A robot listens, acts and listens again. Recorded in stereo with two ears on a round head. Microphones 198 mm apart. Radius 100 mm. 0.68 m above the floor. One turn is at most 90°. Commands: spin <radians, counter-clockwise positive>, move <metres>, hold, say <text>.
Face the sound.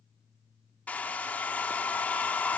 spin 0.52
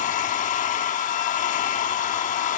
spin 1.57
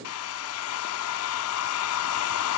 spin 1.40
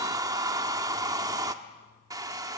spin -0.26
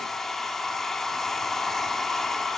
say Facing the hair dryer.